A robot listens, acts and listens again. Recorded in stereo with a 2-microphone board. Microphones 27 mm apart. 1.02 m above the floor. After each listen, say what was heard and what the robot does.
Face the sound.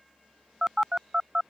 The phone buzzing: about 25° right or 155° right. Turn 25° right.
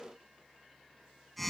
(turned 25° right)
Found it: a phone buzzing, straight ahead.